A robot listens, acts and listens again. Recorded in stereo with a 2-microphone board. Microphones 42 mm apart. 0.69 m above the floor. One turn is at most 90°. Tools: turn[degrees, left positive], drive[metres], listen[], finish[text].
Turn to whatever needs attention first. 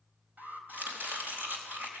Thought: The alarm: about 45° right or 135° right.
Action: turn[-45]
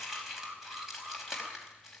Thought: So it is at 85° right.
Action: turn[-85]
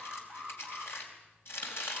Action: finish[Found it: an alarm, straight ahead.]